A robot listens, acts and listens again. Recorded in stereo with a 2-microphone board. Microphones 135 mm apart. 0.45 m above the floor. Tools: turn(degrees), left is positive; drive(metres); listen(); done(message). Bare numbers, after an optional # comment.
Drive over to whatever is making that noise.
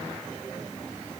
listen()
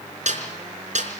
# The snare drum: about 65° right or 115° right.
turn(-65)
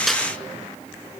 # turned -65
listen()
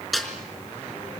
drive(1.0)
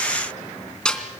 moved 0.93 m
drive(1.0)
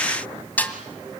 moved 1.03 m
# The snare drum is now 15° left.
turn(15)
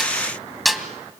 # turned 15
drive(1.0)
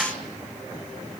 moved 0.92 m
listen()
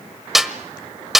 drive(1.0)
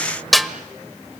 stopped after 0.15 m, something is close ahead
done("Arrived at the snare drum, straight ahead.")